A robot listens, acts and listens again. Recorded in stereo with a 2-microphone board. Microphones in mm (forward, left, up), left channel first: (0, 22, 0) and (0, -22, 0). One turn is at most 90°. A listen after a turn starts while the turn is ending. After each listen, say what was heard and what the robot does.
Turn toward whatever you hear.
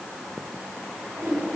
Turn 90° right.
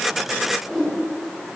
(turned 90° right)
Found it: a whoosh, straight ahead.